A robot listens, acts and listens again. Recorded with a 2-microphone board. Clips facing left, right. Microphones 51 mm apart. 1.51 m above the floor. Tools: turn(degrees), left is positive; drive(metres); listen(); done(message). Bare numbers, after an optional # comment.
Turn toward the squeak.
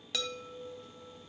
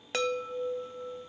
listen()
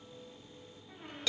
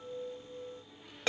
# The squeak: about 45° left or 135° left.
turn(45)
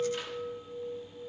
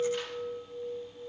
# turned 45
listen()
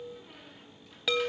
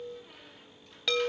done("Facing the squeak, 2 to 4 m away.")